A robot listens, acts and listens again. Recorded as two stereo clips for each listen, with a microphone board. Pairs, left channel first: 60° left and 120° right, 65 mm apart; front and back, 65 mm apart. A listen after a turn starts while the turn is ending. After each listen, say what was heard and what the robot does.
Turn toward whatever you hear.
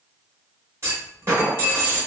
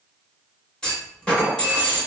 The clunk: 75° right. Turn 75° right.
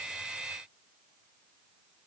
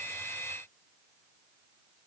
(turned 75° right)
I heard a clunk from this way, but can't make it out now.